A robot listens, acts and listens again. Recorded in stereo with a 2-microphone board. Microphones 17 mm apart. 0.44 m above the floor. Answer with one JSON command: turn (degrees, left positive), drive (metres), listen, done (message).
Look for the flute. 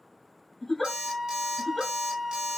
{"turn": -15}
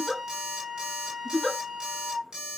{"turn": -150}
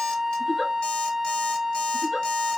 {"turn": -25}
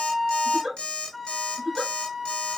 {"turn": 10}
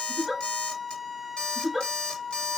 {"done": "Facing the flute."}